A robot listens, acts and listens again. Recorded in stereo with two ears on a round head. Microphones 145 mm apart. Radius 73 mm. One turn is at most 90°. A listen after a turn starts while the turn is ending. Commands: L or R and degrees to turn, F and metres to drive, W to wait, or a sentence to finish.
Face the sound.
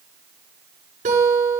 R50
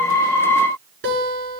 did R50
R80
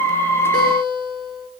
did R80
Facing the guitar.